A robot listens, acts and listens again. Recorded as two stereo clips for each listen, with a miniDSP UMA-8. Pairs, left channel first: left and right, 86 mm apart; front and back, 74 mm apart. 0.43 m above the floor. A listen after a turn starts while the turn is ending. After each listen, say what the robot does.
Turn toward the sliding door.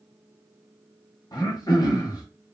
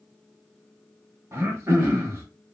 Keep listening.
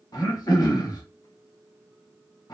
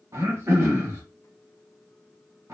Keep listening.
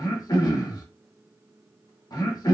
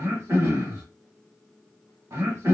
I can't make out a sliding door, only throat clearing.